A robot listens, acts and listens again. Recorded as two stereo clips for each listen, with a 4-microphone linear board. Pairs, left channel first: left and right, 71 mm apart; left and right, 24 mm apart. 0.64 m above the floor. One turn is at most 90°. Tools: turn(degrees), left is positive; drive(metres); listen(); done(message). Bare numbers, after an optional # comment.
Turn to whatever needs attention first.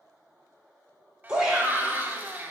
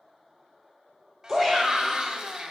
turn(-30)
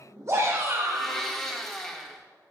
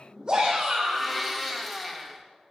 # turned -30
# So it is at 140° right.
turn(-90)
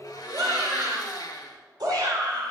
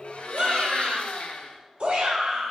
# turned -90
# The shout is now 75° right.
turn(-75)
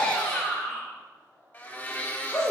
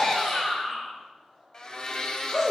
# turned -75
# The shout is now 10° left.
turn(10)
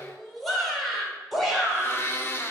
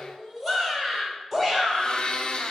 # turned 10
done("Found it: a shout, straight ahead, 1 to 2 m away.")